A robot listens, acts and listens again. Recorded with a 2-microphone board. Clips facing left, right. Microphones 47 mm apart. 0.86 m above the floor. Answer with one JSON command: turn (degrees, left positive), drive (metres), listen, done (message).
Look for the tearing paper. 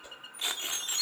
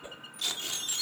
{"turn": 20}
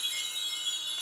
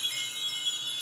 {"listen": true}
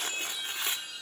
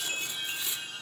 {"turn": 135}
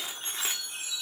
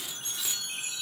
{"turn": 45}
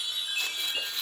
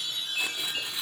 {"turn": -10}
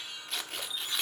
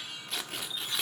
{"done": "Found it: tearing paper, straight ahead."}